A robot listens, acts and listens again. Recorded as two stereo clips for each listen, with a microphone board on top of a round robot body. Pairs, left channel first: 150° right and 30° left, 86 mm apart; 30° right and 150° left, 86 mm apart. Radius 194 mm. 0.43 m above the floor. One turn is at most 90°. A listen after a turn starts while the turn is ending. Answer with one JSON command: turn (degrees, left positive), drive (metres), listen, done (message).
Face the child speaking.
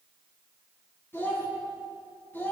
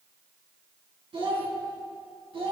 {"turn": 90}
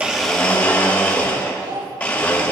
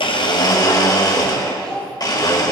{"turn": 50}
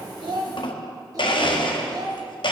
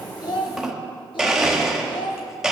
{"turn": -10}
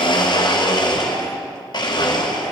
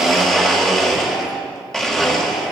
{"listen": true}
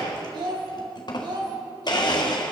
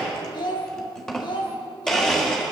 {"done": "Found it: a child speaking, straight ahead."}